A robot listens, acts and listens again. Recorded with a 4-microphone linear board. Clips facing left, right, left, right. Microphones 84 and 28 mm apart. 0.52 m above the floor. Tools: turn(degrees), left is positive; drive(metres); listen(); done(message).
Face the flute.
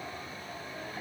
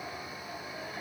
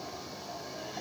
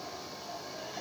listen()
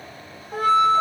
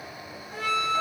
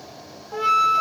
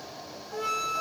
turn(degrees=45)
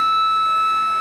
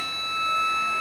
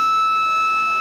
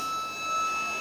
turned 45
turn(degrees=80)
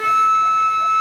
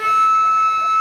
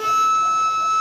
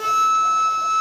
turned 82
done("Facing the flute, under 1 m away.")